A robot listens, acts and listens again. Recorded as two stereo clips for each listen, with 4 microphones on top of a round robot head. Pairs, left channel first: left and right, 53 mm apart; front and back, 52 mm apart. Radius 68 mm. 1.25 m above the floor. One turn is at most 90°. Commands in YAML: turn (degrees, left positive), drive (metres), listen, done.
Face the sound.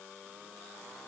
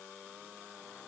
listen: true
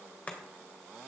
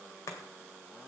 turn: 25
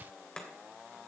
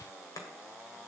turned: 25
turn: 15
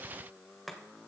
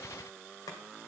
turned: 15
done: "Facing the chopping, 2 to 4 m away."